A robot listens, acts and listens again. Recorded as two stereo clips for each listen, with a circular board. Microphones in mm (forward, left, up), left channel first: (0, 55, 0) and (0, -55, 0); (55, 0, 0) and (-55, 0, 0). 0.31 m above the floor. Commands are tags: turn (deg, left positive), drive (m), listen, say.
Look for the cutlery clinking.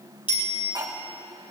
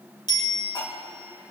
<turn deg="-45"/>
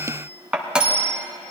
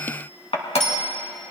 <turn deg="-10"/>
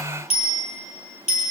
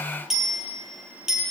<listen/>
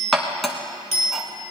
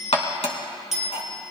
<say>Found it: cutlery clinking, straight ahead, 2 to 4 m away.</say>